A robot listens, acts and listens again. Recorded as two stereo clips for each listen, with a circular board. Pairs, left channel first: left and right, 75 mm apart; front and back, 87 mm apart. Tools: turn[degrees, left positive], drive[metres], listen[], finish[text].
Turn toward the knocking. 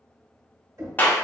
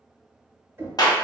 Thought: The knocking: 125° right.
Action: turn[-125]
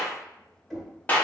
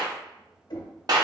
Action: finish[Facing the knocking, 1 to 2 m away.]